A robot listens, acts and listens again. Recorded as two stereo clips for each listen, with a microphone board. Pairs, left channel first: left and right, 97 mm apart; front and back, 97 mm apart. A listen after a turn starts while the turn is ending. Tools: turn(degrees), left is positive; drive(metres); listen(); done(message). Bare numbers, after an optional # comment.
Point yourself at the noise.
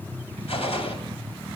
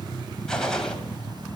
# The gunshot: 85° left.
turn(85)
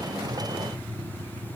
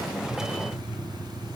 done("I heard a gunshot from this way, but can't make it out now.")